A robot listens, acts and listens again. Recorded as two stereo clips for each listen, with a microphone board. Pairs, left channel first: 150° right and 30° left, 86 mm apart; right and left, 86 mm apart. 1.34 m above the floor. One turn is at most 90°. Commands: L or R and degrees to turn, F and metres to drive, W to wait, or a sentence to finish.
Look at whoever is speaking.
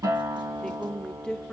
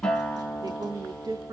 L90
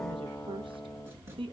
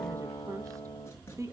L40
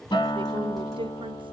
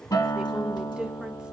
W
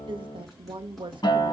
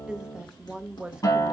L10
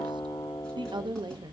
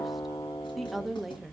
Facing the woman speaking, under 1 m away.